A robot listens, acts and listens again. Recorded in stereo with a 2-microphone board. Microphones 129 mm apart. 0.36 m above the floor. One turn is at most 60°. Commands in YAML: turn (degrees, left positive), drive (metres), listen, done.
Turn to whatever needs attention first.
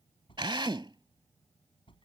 turn: 45
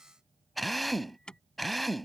done: "Found it: an alarm, straight ahead."